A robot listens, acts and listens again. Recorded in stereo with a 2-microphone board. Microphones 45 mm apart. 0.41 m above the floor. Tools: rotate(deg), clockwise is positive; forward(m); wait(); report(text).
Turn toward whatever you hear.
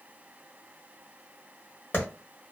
rotate(-55)
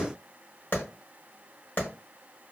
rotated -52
rotate(-60)
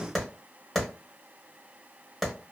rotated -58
report("Facing the clap.")